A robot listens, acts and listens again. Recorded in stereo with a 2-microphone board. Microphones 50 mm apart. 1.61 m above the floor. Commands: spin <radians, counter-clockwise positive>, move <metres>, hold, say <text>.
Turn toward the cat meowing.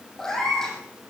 spin 0.52
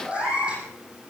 spin -0.35
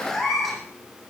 say Facing the cat meowing.